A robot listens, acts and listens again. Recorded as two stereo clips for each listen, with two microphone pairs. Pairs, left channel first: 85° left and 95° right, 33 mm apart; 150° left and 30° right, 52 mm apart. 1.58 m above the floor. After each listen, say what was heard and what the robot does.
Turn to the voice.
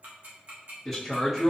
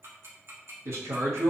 The man speaking: 20° right. Turn 20° right.
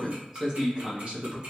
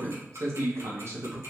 The man speaking is now 60° right. Turn 60° right.
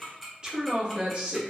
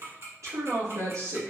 The man speaking is now 45° right. Turn 45° right.
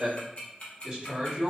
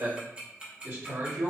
The man speaking is now 20° right. Turn 20° right.
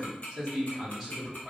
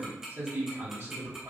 Facing the man speaking.